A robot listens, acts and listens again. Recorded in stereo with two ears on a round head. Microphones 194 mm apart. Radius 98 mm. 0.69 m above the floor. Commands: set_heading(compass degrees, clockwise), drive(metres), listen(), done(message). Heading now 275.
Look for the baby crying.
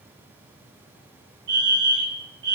listen()
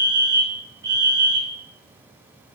listen()
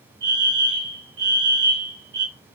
done("I can't make out a baby crying, only a fire alarm.")